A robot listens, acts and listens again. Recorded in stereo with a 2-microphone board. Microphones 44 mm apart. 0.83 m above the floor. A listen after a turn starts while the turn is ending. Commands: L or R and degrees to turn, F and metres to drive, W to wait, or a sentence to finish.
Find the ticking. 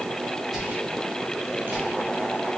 W
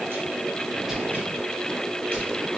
W
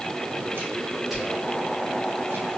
I can't make out ticking to turn to.